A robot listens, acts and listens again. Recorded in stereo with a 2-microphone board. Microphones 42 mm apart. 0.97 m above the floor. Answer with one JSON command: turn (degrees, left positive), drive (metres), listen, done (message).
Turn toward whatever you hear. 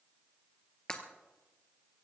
{"turn": 20}
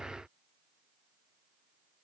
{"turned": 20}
{"listen": true}
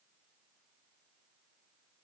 {"done": "I heard breaking glass, but can't make it out now. It was about straight ahead or 140° left."}